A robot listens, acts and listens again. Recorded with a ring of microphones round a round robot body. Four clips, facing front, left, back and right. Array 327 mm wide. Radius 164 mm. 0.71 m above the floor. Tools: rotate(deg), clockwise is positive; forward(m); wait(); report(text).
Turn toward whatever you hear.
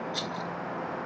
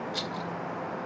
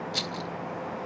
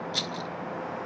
rotate(140)
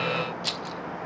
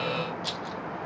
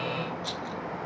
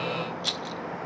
rotate(40)
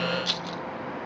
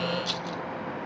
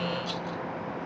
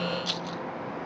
report("Facing the rattle, under 1 m away.")